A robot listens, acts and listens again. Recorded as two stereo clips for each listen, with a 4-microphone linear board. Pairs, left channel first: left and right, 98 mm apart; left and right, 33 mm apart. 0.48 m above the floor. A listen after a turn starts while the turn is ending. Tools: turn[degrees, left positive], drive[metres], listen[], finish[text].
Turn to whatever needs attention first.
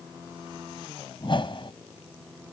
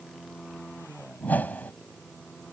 Action: listen[]
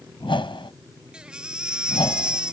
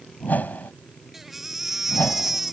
Action: turn[-30]
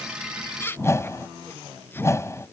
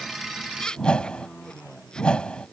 Thought: So it is at 25° left.
Action: turn[25]
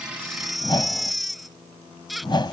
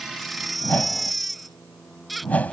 Action: finish[Facing the baby crying.]